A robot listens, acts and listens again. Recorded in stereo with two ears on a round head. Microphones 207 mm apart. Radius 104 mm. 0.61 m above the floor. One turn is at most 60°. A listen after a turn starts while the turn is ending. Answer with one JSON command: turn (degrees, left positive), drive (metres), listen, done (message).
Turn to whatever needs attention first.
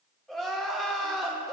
{"turn": 30}
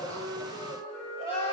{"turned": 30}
{"turn": 60}
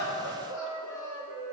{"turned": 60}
{"turn": 60}
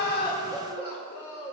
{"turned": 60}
{"turn": 30}
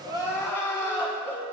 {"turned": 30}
{"turn": 15}
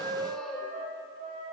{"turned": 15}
{"listen": true}
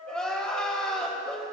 {"done": "Found it: crying, straight ahead, 1 to 2 m away."}